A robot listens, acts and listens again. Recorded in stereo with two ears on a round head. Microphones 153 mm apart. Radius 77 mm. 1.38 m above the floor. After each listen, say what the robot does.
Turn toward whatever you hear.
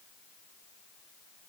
Keep listening.
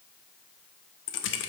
Turn 90° left.
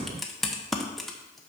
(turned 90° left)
Found it: typing on a keyboard, straight ahead, under 1 m away.